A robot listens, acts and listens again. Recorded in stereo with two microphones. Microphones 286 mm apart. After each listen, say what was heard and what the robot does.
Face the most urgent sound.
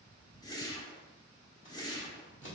Keep listening.
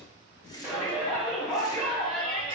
Turn 30° left.
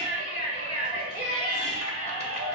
So it is at 30° right. Turn 30° right.
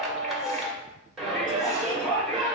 Facing the shout.